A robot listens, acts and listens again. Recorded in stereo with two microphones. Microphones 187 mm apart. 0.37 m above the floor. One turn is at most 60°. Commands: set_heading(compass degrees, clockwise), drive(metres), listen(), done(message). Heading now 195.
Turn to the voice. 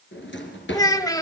set_heading(175)
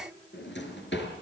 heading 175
listen()
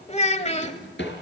set_heading(115)
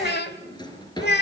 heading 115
set_heading(55)
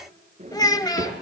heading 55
set_heading(30)
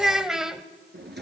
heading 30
done("Found it: a child speaking, straight ahead.")